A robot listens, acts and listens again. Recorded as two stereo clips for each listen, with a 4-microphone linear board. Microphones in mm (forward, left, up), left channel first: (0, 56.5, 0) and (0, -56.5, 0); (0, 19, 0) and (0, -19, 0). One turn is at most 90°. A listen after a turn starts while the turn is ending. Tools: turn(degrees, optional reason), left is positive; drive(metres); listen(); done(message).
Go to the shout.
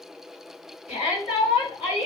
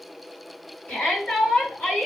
turn(degrees=65, reason="The shout: about 65° left or 115° left.")
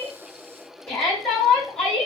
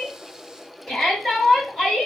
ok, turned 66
turn(degrees=10, reason="So it is at 10° left.")
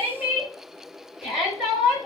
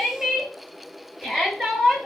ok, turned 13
drive(metres=1.0)
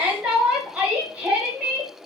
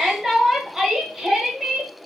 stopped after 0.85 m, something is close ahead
turn(degrees=-10, reason="The shout is now 10° right.")
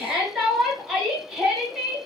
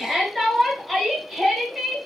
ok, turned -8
done("Arrived at the shout, straight ahead.")